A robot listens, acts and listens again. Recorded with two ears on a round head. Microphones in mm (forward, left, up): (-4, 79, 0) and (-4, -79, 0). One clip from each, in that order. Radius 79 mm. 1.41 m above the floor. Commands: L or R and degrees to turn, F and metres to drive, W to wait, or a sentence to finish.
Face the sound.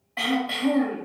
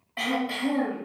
L30
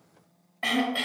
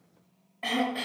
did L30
L145
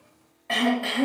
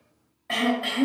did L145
L10
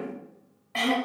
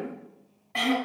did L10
Found it: throat clearing, straight ahead.